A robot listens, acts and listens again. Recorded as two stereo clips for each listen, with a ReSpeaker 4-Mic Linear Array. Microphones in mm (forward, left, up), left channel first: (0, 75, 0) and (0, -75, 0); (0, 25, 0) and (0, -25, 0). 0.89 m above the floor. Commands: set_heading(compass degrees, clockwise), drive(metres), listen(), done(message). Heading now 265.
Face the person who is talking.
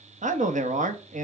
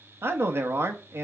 set_heading(320)
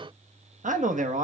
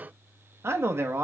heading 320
set_heading(25)
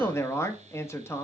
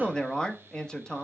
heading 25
set_heading(5)
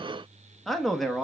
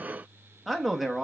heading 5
done("Found it: a man speaking, straight ahead.")